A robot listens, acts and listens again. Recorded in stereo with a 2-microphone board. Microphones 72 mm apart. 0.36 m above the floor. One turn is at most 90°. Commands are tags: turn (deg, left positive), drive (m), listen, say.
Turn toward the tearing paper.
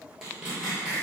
<turn deg="-30"/>
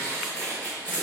<turn deg="20"/>
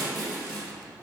<say>Facing the tearing paper, 1 to 2 m away.</say>